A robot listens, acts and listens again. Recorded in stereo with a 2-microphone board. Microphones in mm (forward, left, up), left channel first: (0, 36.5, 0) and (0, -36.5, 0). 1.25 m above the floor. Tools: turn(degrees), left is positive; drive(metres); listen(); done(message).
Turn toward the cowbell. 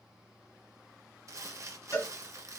turn(degrees=45)
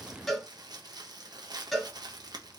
done("Found it: a cowbell, straight ahead.")